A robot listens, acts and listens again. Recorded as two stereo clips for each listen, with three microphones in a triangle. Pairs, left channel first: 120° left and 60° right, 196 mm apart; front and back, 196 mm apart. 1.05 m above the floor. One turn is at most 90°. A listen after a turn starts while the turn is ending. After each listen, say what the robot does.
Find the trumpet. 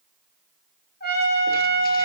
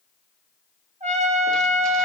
Turn 90° left.
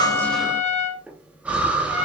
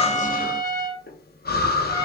Turn 70° left.
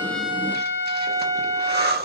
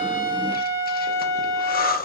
Turn 15° left.
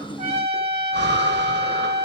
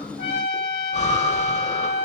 Found it: a trumpet, straight ahead, 1 to 2 m away.